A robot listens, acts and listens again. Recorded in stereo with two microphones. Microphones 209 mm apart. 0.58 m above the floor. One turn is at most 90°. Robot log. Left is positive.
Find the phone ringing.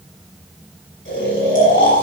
cmd idle
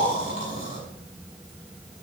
cmd idle
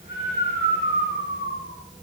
end: I can't make out a phone ringing to turn to.